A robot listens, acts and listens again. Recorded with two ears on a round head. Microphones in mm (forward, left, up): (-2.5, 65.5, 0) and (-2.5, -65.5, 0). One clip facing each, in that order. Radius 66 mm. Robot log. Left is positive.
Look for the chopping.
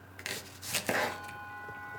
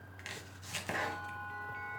note: The chopping: about 65° left or 115° left.
cmd yaw +65
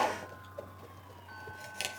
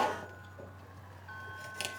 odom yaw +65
end: Found it: chopping, straight ahead.